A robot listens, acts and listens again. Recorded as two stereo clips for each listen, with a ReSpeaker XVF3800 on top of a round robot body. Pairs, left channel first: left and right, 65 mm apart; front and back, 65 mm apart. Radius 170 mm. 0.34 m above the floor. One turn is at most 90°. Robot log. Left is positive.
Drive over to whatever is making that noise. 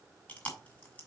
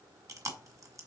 note: The chewing: 155° left.
cmd yaw +90
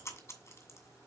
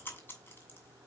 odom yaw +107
note: The chewing is now 50° left.
cmd yaw +50
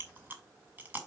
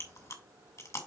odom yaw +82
note: The chewing is now 30° right.
cmd yaw -30
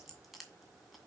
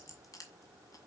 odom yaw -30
cmd idle
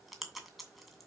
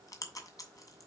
cmd fwd 1.0
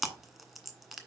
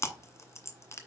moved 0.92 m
cmd fwd 1.0
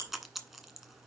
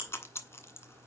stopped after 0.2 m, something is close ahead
end: Arrived at the chewing, straight ahead.